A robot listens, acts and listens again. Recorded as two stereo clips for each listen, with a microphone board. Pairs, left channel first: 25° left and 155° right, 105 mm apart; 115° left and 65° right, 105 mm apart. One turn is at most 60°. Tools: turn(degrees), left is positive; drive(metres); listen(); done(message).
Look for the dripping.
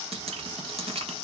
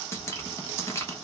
turn(degrees=60)
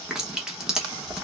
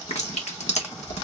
turn(degrees=60)
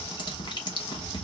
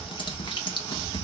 turn(degrees=60)
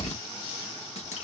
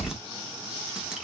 turn(degrees=15)
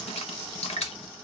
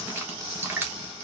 done("Found it: dripping, straight ahead, 1 to 2 m away.")